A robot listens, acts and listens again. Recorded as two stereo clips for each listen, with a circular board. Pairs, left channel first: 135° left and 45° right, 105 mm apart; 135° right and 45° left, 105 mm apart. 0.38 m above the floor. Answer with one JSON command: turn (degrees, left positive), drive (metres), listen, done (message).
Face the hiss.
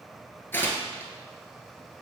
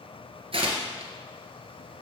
{"listen": true}
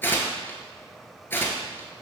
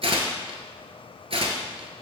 {"listen": true}
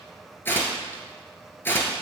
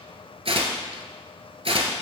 {"done": "I can't make out a hiss, only tearing paper."}